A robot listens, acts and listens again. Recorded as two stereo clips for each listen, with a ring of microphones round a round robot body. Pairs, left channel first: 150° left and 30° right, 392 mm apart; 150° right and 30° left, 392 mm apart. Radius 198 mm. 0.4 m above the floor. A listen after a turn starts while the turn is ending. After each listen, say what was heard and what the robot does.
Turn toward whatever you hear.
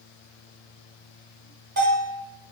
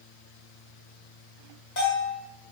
The bell: 95° right. Turn 95° right.
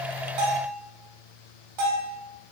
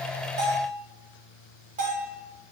The bell is now 40° right. Turn 40° right.
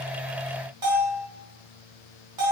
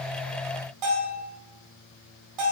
Facing the bell.